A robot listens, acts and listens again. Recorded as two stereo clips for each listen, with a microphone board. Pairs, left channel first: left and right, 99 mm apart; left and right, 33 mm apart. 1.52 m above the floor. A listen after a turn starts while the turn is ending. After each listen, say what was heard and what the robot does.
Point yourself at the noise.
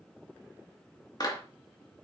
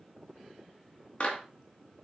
The clap: about 45° left or 135° left. Turn 45° left.
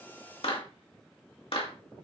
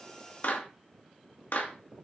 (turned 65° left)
So it is at 70° left. Turn 70° left.
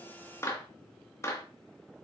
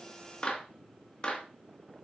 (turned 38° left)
The clap is now 30° left. Turn 30° left.
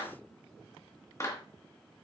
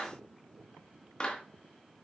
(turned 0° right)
The clap is now 30° left. Turn 30° left.
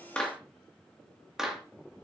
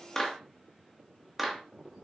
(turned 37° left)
Facing the clap, 2 to 4 m away.